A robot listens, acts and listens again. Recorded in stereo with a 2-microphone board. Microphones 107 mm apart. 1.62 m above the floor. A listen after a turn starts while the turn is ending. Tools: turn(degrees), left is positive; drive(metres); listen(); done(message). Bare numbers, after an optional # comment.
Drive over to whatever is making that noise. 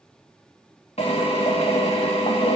# The drill: about 70° left or 110° left.
turn(70)
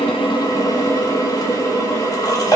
# So it is at 35° left.
turn(35)
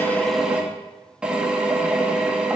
# The drill is now 10° right.
turn(-10)
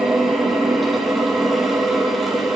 drive(1.0)
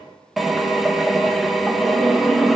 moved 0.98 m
drive(1.0)
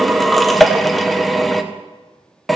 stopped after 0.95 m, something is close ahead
done("I am next to the drill.")